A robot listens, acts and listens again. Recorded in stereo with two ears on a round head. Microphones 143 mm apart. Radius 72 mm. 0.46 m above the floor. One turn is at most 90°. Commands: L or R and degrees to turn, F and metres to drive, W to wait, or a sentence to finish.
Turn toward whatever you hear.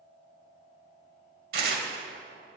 R65
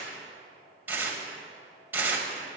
R15
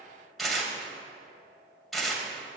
Facing the tearing paper.